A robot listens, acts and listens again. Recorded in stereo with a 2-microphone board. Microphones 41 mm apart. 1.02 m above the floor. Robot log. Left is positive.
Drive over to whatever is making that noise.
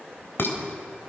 note: The dishes clattering: about 65° left or 115° left.
cmd yaw +65
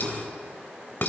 note: So it is at 50° left.
cmd yaw +50
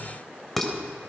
cmd fwd 1.0
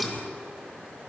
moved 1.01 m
cmd fwd 1.0
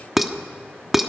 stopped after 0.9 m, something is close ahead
end: Arrived at the dishes clattering, straight ahead.